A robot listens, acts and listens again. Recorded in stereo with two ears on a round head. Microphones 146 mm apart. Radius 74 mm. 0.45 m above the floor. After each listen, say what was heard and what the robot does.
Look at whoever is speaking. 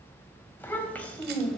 Turn 30° left.
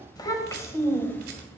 Turn 30° left.
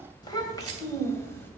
The child speaking: about 15° left or 165° left. Turn 15° left.
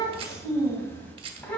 Turn 30° left.
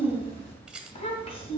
So it is at 140° left. Turn 140° left.
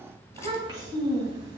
The child speaking is now 25° right. Turn 25° right.
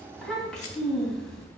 Found it: a child speaking, straight ahead.